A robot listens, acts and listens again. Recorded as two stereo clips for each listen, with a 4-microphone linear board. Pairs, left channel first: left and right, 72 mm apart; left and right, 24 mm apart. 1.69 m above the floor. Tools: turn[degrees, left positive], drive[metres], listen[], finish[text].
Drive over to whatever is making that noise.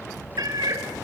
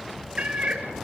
Thought: The cat meowing: about 60° right or 120° right.
Action: turn[-60]
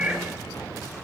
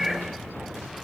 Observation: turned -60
Thought: So it is at 20° right.
Action: turn[-20]
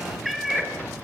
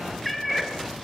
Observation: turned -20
Action: drive[1.0]
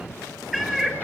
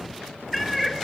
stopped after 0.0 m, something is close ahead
Action: finish[Something is in my way. I am facing the cat meowing but have not reached it.]